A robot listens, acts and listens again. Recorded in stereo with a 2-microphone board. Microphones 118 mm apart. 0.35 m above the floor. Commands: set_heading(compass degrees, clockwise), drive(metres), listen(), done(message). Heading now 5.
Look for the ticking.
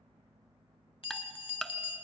set_heading(335)
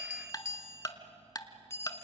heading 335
set_heading(190)
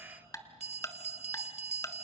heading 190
set_heading(160)
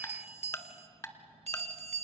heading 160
set_heading(135)
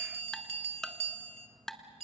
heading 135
done("Facing the ticking, 1 to 2 m away.")